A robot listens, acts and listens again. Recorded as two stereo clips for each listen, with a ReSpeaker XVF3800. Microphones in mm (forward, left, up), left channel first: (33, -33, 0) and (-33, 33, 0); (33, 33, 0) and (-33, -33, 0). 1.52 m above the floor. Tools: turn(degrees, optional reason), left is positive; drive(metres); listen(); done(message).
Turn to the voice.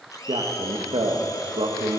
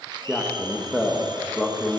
turn(degrees=135, reason="The man speaking: 135° left.")
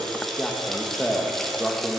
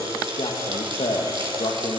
turn(degrees=40, reason="The man speaking is now 40° left.")
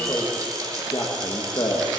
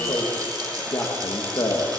turn(degrees=-10, reason="The man speaking is now 10° right.")
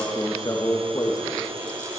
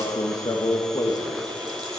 done("Found it: a man speaking, straight ahead, 1 to 2 m away.")